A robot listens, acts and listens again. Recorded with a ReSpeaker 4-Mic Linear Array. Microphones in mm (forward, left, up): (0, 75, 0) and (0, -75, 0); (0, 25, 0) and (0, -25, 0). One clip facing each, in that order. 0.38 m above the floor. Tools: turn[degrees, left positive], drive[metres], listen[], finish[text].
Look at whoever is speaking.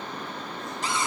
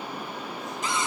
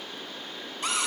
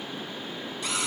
Action: listen[]
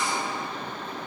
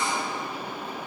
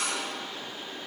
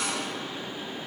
Action: listen[]
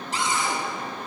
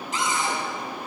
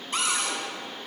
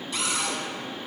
Action: finish[I can't make out anyone speaking to turn to.]